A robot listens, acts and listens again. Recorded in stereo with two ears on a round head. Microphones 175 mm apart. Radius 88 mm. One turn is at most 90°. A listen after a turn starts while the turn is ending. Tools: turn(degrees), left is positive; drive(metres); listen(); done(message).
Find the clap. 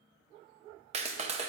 turn(degrees=-35)
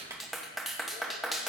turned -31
done("Found it: a clap, straight ahead.")